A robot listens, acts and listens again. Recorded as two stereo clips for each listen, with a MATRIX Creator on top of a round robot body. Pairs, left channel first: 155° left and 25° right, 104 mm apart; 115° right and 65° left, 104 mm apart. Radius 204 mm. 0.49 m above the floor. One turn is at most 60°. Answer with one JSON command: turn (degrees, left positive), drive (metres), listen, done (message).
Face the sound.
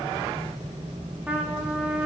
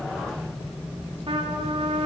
{"turn": 55}
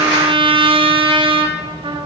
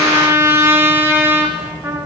{"done": "Facing the trumpet, 1 to 2 m away."}